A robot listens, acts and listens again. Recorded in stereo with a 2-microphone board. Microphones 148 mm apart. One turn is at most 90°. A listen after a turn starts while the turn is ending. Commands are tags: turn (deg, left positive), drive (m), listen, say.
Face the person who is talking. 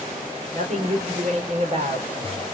<turn deg="-55"/>
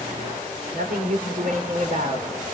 <turn deg="-70"/>
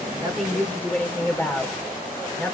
<turn deg="15"/>
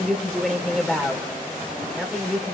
<say>Facing the woman speaking.</say>